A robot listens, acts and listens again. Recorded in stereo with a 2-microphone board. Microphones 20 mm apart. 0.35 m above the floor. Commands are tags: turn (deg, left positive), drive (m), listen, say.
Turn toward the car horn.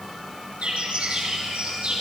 <listen/>
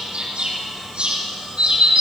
<listen/>
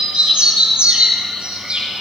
<say>I can't make out a car horn, only a bird.</say>